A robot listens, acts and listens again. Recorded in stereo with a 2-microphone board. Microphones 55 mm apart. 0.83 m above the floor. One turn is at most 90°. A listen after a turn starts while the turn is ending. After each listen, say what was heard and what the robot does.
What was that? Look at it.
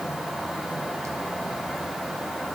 Keep listening.
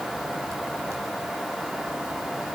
Keep listening.
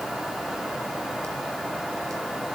I can't make out anything to turn to.